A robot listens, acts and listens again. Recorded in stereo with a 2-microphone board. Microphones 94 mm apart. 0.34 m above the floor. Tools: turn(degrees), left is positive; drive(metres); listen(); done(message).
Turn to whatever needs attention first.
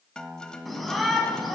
turn(degrees=30)
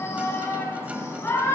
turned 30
turn(degrees=145)
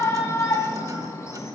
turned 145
turn(degrees=40)
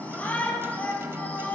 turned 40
turn(degrees=20)
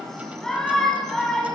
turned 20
done("Facing the shout.")